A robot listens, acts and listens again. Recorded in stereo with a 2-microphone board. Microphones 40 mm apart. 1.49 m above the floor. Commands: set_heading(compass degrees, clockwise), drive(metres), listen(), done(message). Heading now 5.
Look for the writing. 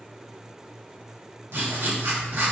set_heading(70)
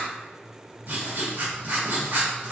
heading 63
set_heading(123)
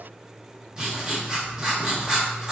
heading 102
set_heading(122)
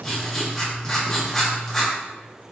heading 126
done("Facing the writing, 1 to 2 m away.")